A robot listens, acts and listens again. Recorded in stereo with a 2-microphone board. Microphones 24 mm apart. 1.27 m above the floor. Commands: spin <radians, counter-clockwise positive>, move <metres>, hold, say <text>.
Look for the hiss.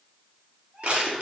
hold
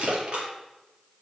hold
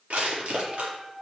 say I can't make out a hiss to turn to.